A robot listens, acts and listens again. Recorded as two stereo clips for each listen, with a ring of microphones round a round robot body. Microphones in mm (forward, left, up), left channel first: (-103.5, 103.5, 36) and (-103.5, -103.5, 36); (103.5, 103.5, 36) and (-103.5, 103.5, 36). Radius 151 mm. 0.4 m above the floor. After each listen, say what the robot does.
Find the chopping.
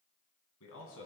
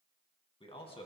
Keep listening.
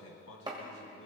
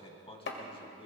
Turn 20° right.
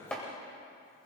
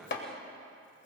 Facing the chopping, 1 to 2 m away.